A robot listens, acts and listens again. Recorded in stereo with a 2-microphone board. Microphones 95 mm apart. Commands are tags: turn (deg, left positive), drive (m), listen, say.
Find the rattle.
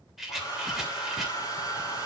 <turn deg="-30"/>
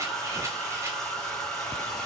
<listen/>
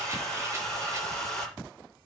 <listen/>
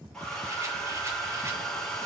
<say>I heard a rattle, but can't make it out now. It was about 25° left or 145° right.</say>